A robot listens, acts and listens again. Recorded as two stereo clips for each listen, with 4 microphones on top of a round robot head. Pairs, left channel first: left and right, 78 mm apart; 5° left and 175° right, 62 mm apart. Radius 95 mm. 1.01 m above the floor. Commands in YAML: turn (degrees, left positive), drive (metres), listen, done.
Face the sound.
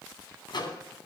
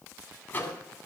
turn: 60
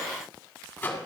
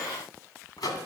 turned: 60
turn: 20
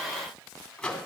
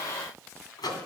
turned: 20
turn: 10
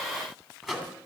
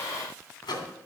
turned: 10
done: "Found it: a microwave, straight ahead, 2 to 4 m away."